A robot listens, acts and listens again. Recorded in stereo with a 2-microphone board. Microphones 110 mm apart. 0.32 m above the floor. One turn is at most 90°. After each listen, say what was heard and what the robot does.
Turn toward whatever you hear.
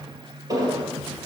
The explosion: about 35° right or 145° right. Turn 35° right.
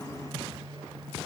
Keep listening.
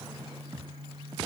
I heard an explosion, but can't make it out now. It was about straight ahead or 110° right.